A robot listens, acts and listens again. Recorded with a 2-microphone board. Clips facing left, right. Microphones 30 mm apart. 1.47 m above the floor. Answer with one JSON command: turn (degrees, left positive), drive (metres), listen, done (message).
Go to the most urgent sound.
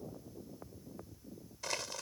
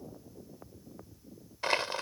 {"listen": true}
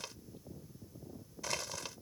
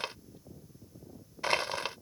{"listen": true}
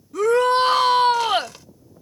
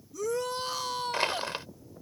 {"turn": 90}
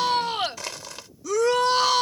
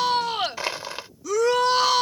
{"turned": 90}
{"drive": 1.0}
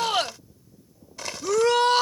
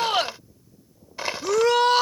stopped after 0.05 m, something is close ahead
{"done": "Blocked. The shout is further on, straight ahead."}